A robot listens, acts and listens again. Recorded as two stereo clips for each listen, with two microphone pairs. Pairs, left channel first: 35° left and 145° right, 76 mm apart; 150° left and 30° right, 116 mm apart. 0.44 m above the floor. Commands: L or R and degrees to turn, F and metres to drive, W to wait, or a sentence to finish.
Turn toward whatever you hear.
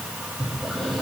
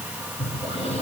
L120
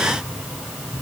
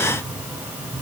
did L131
R10
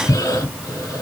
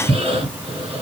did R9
Facing the breathing, 1 to 2 m away.